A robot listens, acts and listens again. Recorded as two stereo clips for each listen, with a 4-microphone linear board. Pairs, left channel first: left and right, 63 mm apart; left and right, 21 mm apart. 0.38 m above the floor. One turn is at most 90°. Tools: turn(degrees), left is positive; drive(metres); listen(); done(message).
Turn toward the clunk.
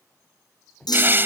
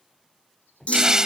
turn(degrees=90)
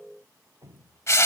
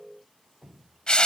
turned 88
done("Facing where the clunk came from. I can't hear it now.")